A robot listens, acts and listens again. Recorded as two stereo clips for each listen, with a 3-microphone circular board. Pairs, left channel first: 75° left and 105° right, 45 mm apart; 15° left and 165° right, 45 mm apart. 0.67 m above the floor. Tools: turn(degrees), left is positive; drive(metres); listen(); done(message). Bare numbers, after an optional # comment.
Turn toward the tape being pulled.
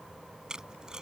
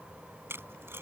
# The tape being pulled: straight behind.
turn(180)
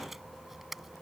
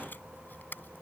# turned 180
# The tape being pulled is now 20° right.
turn(-20)
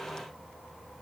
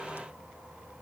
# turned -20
listen()
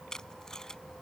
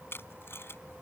done("Facing the tape being pulled.")